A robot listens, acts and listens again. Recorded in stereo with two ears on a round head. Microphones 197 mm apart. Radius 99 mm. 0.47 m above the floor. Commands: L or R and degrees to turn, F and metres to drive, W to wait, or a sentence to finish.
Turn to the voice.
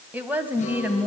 R30
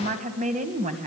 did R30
R145
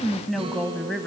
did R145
Facing the woman speaking.